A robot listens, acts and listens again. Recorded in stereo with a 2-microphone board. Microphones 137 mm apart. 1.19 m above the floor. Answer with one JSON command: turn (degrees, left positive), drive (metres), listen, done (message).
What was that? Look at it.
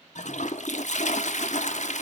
{"turn": 65}
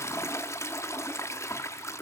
{"turn": 25}
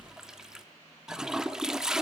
{"done": "Found it: a toilet flushing, straight ahead."}